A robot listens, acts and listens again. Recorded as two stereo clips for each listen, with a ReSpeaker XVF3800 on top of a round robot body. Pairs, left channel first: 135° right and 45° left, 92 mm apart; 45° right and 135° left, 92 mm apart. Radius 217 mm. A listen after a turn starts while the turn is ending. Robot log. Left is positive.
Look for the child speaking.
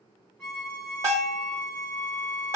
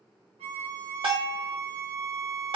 cmd idle
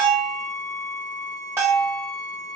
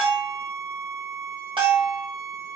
cmd idle
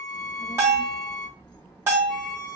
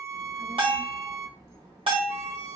note: The child speaking: straight behind.
cmd yaw +180
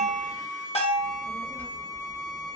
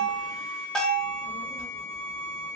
note: The child speaking is now 60° right.
cmd yaw -60
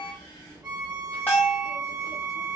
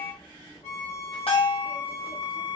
end: Found it: a child speaking, straight ahead, 2 to 4 m away.